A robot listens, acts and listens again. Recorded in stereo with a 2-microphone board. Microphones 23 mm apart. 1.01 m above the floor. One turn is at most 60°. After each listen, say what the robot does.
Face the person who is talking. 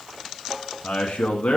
Turn 60° left.
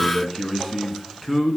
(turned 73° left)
Facing the man speaking, 1 to 2 m away.